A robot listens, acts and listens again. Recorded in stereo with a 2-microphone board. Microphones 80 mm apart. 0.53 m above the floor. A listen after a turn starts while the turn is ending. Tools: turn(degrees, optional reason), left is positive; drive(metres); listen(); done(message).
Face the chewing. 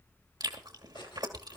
turn(degrees=-60, reason="The chewing: about 60° right or 120° right.")
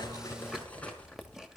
done("Facing the chewing.")